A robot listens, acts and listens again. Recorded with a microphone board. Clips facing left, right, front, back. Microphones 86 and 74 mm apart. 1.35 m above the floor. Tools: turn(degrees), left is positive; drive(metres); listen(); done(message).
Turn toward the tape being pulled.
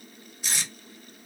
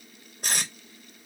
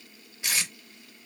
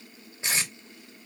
turn(degrees=-120)
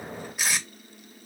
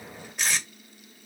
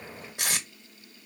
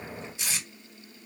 turn(degrees=10)
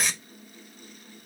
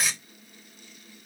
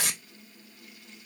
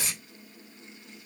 done("Facing the tape being pulled, 1 to 2 m away.")